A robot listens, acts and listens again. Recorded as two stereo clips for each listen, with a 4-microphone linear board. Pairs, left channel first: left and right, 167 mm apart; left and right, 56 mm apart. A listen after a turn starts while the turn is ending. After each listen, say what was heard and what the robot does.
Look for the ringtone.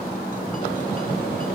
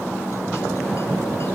Keep listening.
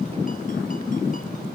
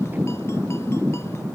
Keep listening.
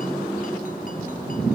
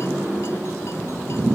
I can't make out a ringtone.